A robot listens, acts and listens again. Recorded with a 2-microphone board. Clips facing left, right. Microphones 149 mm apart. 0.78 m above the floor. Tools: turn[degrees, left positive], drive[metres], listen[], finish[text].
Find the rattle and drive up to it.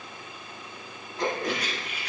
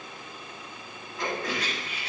Thought: The rattle: about 30° right or 150° right.
Action: turn[-30]
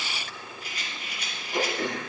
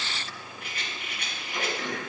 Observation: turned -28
Thought: So it is at 120° right.
Action: turn[-120]
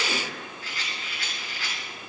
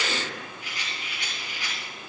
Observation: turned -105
Thought: The rattle is now 20° right.
Action: turn[-20]
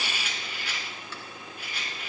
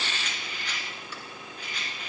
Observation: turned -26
Thought: The rattle is now 10° left.
Action: turn[10]
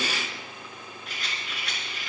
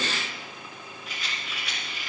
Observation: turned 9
Action: drive[1.0]
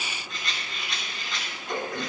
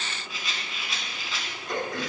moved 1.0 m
Action: drive[1.0]
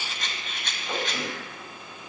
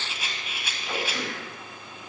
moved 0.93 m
Thought: The rattle is now 10° right.
Action: turn[-10]
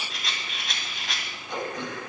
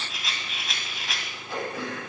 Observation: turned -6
Action: drive[1.0]
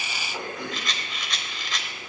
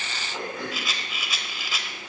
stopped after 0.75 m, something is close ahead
Action: finish[I am next to the rattle.]